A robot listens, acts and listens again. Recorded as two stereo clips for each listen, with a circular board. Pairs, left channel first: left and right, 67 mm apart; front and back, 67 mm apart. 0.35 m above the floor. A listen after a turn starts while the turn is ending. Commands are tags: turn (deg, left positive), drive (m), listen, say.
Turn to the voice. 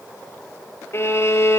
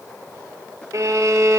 <listen/>
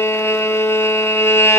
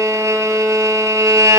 <listen/>
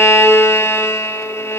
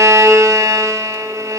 <say>I can't make out anyone speaking to turn to.</say>